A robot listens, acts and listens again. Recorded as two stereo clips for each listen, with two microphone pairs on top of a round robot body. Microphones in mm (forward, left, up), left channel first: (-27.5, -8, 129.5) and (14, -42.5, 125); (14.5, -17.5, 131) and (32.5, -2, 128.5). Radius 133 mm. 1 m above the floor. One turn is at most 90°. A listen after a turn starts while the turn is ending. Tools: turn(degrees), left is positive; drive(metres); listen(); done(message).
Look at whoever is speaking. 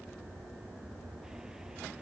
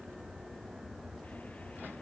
listen()
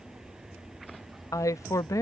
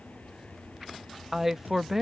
turn(degrees=90)
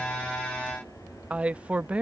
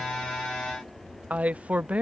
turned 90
turn(degrees=25)
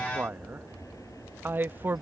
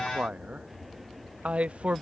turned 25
turn(degrees=10)
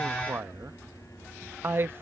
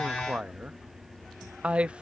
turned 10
done("Found it: a man speaking, straight ahead.")